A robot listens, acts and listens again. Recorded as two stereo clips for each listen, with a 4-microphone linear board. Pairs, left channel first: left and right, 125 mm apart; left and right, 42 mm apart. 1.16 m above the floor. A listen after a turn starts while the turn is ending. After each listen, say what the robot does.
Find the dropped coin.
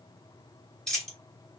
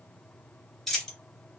Turn 30° left.
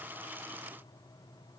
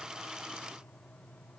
Keep listening.
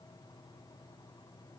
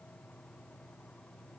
I heard a dropped coin, but can't make it out now. It was about 25° right or 145° left.